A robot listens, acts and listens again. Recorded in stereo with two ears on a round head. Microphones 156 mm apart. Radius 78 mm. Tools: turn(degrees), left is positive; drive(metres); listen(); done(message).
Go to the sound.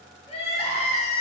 turn(degrees=35)
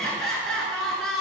drive(metres=1.0)
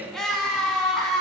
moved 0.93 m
drive(metres=1.0)
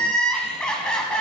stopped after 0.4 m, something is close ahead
done("Arrived at the crying, straight ahead.")